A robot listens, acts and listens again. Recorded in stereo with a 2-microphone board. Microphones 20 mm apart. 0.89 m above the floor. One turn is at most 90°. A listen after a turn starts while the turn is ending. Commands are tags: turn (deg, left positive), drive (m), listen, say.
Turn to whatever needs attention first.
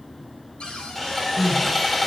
<turn deg="-15"/>
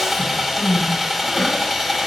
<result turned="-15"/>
<say>Facing the crying.</say>